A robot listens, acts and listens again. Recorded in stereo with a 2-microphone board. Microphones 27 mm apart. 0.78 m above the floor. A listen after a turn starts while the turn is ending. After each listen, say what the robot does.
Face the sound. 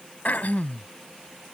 Turn 90° left.
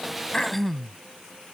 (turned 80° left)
Turn 10° left.
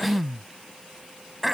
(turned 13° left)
Found it: throat clearing, straight ahead.